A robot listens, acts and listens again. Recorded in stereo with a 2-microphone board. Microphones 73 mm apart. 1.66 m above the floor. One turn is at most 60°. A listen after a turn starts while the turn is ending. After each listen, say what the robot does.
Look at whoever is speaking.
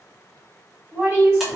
Turn 35° right.
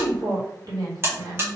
Turn 60° right.
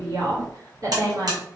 Turn 50° right.
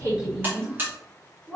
Facing the woman speaking.